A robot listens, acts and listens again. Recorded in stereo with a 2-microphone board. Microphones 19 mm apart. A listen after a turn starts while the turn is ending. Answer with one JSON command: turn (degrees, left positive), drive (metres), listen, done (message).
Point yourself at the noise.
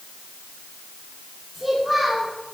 {"turn": -30}
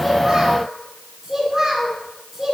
{"turn": -20}
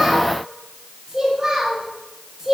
{"turn": -150}
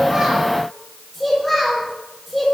{"done": "Found it: a child speaking, straight ahead."}